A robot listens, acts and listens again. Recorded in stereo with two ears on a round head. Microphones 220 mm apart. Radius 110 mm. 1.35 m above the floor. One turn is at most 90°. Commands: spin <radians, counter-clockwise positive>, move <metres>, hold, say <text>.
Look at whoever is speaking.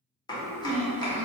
spin -0.44
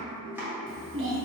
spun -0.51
spin -1.57
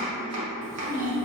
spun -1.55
spin -0.61
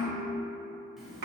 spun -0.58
say Facing the child speaking, under 1 m away.